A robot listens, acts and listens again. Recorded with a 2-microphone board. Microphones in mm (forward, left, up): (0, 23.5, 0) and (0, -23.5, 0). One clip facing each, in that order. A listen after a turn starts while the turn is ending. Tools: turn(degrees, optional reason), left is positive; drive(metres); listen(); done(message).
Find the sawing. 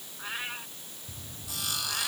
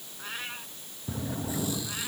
turn(degrees=70, reason="The sawing: about 70° left or 110° left.")
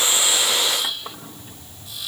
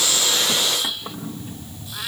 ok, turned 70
done("Facing the sawing.")